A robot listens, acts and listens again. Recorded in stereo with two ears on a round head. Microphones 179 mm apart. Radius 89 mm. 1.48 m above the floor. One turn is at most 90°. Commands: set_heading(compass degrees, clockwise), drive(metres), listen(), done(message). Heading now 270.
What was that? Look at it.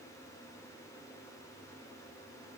listen()
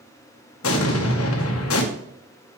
set_heading(195)
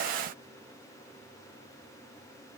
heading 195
listen()
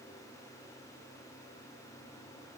done("I heard an explosion, but can't make it out now. It was about straight ahead or 30° left.")